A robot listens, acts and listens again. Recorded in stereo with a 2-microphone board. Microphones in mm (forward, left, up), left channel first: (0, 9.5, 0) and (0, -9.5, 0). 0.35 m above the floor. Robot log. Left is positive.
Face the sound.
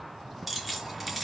cmd yaw -30
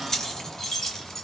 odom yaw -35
note: So it is at 15° left.
cmd yaw +15
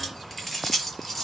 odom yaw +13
end: Facing the keys jangling, over 4 m away.